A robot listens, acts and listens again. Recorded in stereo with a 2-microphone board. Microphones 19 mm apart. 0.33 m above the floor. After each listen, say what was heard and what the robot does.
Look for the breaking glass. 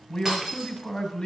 The breaking glass: about 25° right or 155° right. Turn 25° right.
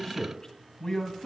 Keep listening.
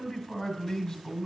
I heard breaking glass, but can't make it out now. It was about straight ahead or 130° right.